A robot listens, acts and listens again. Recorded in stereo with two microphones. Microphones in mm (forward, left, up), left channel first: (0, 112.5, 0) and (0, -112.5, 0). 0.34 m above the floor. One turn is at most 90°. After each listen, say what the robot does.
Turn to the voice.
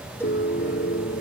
Keep listening.
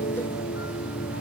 Keep listening.
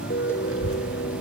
Turn 75° right.
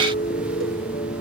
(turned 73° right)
Keep listening.
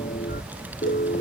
Facing the child speaking.